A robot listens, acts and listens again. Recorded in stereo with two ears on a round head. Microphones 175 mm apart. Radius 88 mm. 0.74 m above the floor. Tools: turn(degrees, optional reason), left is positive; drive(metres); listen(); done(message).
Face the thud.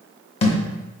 turn(degrees=30, reason="The thud: about 30° left or 150° left.")
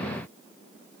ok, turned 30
listen()
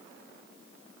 done("I heard a thud, but can't make it out now. It was about straight ahead or 120° left.")